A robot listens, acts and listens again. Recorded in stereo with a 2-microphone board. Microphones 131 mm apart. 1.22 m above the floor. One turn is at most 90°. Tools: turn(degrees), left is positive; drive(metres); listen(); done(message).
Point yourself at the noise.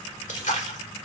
turn(degrees=60)
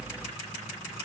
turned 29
listen()
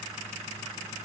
done("I heard a splash, but can't make it out now. It was about 35° left or 90° left.")